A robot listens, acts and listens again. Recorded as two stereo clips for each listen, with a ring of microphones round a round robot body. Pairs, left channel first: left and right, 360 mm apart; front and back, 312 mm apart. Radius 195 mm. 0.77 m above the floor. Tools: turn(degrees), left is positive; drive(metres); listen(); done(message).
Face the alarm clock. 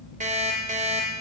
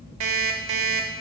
turn(degrees=-160)
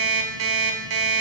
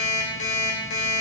turn(degrees=-55)
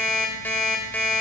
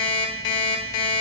done("Facing the alarm clock, 1 to 2 m away.")